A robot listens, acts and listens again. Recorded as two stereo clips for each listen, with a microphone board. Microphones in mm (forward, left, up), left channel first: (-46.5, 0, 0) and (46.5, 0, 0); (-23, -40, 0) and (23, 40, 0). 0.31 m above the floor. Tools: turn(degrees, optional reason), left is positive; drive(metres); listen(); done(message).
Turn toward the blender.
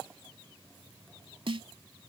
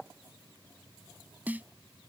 listen()
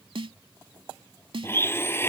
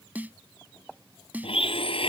turn(degrees=-115, reason="The blender: 115° right.")
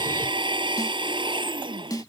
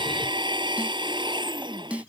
turn(degrees=30, reason="The blender is now 30° left.")
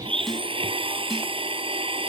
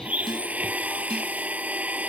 turn(degrees=-15, reason="The blender is now 15° right.")
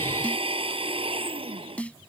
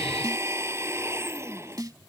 done("Facing the blender.")